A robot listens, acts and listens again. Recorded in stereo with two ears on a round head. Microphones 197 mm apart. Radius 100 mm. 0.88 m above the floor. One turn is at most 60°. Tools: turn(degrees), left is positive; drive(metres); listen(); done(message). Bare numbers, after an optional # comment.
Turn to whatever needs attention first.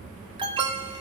# The alarm: about 20° right or 160° right.
turn(-20)
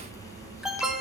done("Facing the alarm, 1 to 2 m away.")